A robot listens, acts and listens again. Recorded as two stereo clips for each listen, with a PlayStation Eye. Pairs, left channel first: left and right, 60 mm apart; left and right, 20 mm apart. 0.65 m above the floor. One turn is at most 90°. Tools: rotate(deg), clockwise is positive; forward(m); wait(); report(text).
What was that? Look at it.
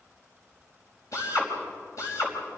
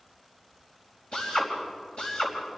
rotate(-60)
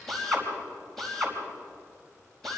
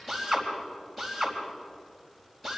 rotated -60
report("Found it: a drill, straight ahead.")